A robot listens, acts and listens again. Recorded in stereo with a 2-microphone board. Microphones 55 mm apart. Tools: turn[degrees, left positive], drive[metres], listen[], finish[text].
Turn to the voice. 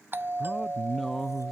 Action: turn[30]
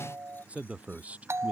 Thought: So it is at 25° right.
Action: turn[-25]
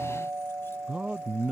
Thought: The man speaking is now 20° right.
Action: turn[-20]
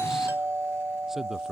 Action: finish[Facing the man speaking.]